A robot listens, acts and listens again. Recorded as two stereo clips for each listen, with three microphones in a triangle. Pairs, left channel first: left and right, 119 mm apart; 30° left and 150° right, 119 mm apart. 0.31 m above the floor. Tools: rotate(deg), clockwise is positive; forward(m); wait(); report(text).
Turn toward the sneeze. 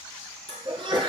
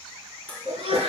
rotate(120)
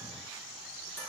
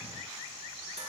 report("Facing where the sneeze came from. I can't hear it now.")